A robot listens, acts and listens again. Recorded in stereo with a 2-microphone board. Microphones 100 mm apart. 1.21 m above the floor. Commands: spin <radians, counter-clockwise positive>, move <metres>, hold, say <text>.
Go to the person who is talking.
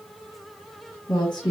spin 0.70
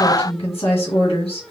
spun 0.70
spin 1.75
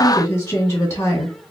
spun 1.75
spin 0.52
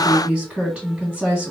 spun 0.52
spin -0.17
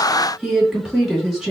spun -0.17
move 1.0
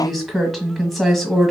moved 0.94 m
move 1.0
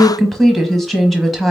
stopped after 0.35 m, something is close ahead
say Arrived at the woman speaking, straight ahead.